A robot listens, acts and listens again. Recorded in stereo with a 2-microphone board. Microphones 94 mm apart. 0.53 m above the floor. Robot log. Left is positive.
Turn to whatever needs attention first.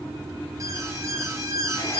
note: The alarm: about 35° right or 145° right.
cmd yaw -35
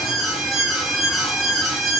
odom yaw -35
end: Found it: an alarm, straight ahead.